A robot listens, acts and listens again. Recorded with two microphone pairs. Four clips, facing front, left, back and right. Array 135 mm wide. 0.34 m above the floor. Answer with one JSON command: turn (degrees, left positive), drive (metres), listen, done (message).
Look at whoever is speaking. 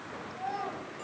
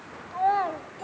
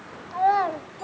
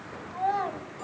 {"turn": 160}
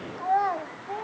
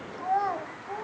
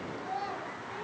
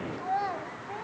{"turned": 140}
{"turn": 20}
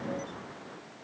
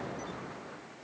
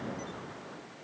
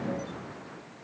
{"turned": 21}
{"listen": true}
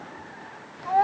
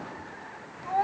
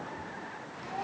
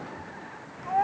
{"done": "Found it: a child speaking, straight ahead, 1 to 2 m away."}